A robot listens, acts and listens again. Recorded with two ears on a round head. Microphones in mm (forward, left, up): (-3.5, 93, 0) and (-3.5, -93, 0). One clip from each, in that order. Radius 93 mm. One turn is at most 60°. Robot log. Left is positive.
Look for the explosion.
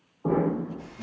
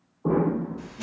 note: The explosion: about 55° left or 125° left.
cmd yaw +55
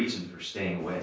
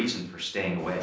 cmd idle
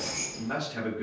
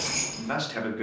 end: I heard an explosion, but can't make it out now. It was about straight ahead or 70° left.